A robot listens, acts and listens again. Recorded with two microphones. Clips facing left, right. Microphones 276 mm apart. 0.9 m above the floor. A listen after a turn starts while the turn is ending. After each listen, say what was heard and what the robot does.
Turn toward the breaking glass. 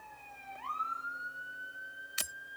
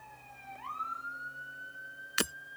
Turn 90° right.
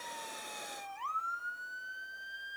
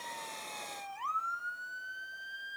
Facing where the breaking glass came from. I can't hear it now.